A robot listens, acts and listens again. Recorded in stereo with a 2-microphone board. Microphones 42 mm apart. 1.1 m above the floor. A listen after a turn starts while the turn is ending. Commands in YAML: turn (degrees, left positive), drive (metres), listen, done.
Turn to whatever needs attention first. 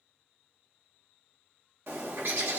listen: true
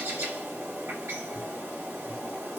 listen: true
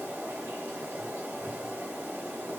done: "I can't make out anything urgent to turn to."